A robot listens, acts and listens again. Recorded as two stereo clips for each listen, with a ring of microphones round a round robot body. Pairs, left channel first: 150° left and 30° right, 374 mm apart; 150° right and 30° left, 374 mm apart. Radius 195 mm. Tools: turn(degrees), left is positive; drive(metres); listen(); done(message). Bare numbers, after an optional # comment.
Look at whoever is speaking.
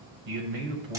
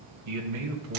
# The man speaking: 20° right.
turn(-20)
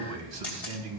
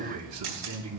# The man speaking is now 15° right.
turn(-15)
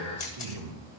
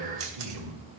done("Found it: a man speaking, straight ahead.")